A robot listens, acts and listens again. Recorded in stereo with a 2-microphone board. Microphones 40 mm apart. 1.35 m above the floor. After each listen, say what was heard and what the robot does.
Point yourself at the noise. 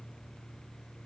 Keep listening.
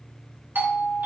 The doorbell: about 55° right or 125° right. Turn 55° right.
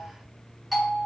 Found it: a doorbell, straight ahead, 2 to 4 m away.